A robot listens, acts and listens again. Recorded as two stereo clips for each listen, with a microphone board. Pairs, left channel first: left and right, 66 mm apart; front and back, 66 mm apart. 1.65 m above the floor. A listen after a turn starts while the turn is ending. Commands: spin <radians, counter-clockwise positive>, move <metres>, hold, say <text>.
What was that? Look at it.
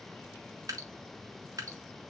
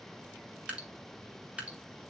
spin -1.92
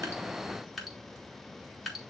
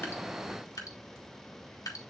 say Facing the dripping, 1 to 2 m away.